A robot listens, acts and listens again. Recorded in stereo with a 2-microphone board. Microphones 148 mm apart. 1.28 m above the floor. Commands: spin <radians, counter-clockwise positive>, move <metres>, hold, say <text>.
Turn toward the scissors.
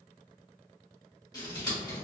spin 0.44
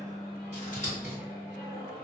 spin 2.27
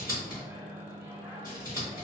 spin 0.44
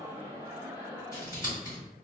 spin 0.35
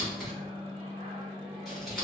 say Found it: scissors, straight ahead.